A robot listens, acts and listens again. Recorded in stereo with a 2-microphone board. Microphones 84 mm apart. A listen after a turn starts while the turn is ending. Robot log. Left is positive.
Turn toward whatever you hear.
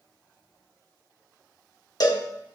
note: The cowbell: about 55° left or 125° left.
cmd yaw +55
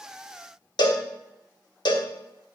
note: So it is at 70° left.
cmd yaw +70
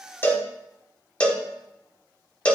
note: The cowbell is now 15° left.
cmd yaw +15
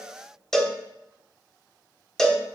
end: Facing the cowbell.